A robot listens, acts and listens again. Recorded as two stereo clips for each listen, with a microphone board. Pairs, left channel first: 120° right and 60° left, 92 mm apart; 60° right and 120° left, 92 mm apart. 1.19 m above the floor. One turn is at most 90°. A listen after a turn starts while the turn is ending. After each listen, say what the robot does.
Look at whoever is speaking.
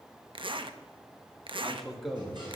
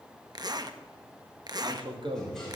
Turn 90° left.
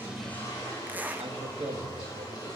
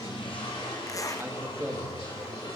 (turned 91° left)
Turn 60° left.
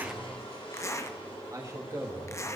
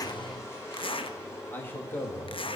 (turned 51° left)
Turn 10° left.
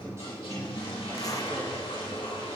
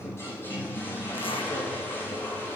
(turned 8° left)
Keep listening.
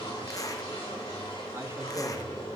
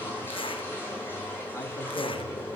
Keep listening.
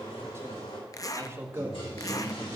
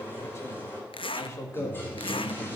Found it: a man speaking, straight ahead.